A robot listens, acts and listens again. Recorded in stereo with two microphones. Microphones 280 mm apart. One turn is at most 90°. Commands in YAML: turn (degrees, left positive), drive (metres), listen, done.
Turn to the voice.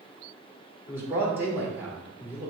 turn: -30
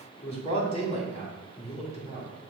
turn: 25
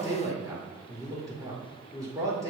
turn: -15
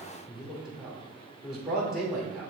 done: "Found it: a man speaking, straight ahead."